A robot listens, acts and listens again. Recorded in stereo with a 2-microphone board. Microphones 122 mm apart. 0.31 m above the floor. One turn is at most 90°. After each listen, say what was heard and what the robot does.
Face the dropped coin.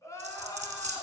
The dropped coin: about 70° right or 110° right. Turn 70° right.
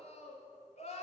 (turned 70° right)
Keep listening.
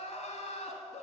I heard a dropped coin, but can't make it out now. It was about straight ahead or 40° right.